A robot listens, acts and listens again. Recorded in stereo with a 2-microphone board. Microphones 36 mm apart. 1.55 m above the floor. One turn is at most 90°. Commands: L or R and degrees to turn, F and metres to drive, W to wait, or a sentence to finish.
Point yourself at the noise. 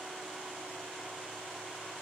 W
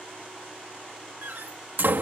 R65
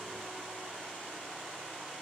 W
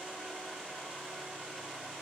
I heard a door slam, but can't make it out now. It was about straight ahead or 50° right.